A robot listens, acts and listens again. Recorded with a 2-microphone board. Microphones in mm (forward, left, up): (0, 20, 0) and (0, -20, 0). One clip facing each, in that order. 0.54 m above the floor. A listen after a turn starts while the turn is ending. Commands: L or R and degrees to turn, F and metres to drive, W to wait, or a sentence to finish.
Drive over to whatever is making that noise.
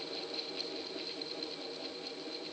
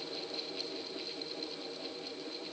W
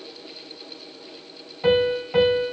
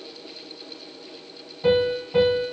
L65
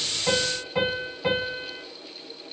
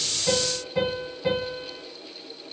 L55
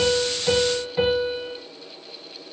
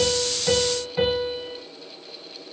F1.0
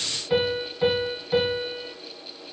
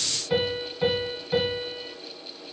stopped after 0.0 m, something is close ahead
L10
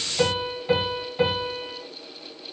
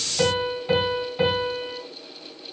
Blocked. The piano is further on, straight ahead.